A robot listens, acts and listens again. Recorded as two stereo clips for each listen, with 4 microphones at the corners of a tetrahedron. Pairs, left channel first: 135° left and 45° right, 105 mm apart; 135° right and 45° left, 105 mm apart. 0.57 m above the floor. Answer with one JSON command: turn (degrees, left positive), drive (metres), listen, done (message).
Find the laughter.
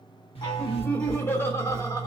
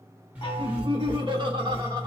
{"turn": 90}
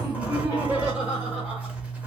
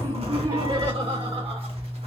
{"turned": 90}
{"turn": 35}
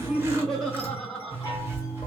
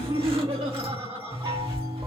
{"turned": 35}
{"turn": 45}
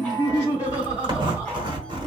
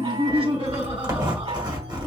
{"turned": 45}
{"turn": 25}
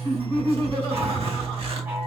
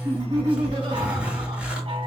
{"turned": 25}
{"done": "Facing the laughter, 2 to 4 m away."}